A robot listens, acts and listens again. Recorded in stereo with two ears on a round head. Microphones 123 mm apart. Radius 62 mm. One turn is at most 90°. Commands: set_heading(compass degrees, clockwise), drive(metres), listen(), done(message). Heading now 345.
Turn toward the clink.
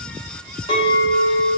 set_heading(305)
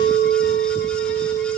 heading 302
set_heading(212)
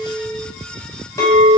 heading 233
set_heading(208)
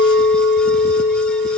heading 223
set_heading(208)
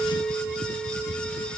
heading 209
done("Found it: a clink, straight ahead.")